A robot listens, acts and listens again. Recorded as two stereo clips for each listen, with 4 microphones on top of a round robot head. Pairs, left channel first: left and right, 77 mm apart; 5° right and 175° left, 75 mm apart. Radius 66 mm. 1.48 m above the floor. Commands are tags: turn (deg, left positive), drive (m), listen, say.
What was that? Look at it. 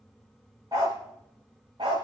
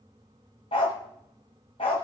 <turn deg="-40"/>
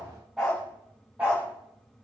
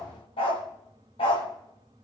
<turn deg="-15"/>
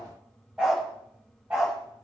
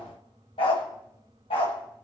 <turn deg="-15"/>
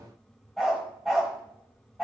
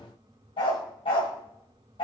<say>Found it: a dog barking, straight ahead, 2 to 4 m away.</say>